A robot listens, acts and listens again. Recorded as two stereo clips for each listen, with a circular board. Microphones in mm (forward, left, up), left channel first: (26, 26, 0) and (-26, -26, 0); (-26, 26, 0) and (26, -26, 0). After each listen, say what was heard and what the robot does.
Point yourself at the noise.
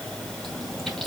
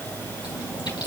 The chewing: 130° left. Turn 130° left.
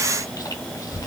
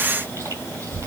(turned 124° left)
Found it: chewing, straight ahead, over 4 m away.